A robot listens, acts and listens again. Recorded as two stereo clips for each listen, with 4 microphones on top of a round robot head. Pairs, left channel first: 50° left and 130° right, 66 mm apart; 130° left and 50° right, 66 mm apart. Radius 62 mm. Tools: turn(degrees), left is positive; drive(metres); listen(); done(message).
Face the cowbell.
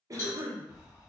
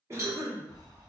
done("Facing the cowbell, 1 to 2 m away.")